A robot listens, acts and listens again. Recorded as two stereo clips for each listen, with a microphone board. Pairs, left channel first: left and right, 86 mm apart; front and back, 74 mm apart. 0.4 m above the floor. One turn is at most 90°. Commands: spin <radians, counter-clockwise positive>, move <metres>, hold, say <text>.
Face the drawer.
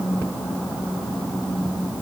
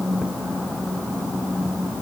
hold
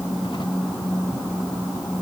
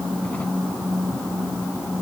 hold
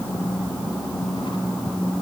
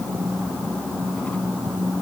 say I can't make out a drawer.